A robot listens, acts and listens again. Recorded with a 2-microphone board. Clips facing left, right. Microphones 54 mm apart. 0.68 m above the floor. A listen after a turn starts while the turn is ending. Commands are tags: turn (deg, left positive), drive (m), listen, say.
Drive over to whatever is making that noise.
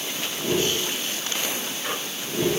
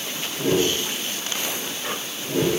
<turn deg="-75"/>
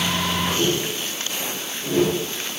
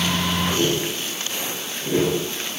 <turn deg="-20"/>
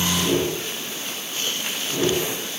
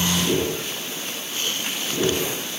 <drive m="1.0"/>
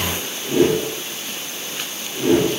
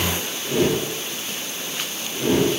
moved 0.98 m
<drive m="1.0"/>
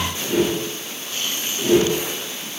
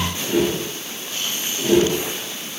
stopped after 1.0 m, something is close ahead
<say>I am next to the whoosh.</say>